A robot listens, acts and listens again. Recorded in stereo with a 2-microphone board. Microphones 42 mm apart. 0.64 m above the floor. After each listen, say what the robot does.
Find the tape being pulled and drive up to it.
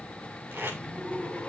Turn 55° right.
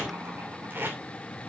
Turn 60° right.
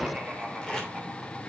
Turn 15° left.
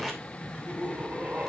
Drive 1.0 m forward.
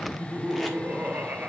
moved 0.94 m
Keep listening.
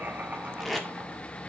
Drive 1.0 m forward.
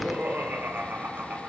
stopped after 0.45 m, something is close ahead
Keep listening.
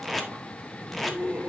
Arrived at the tape being pulled, straight ahead.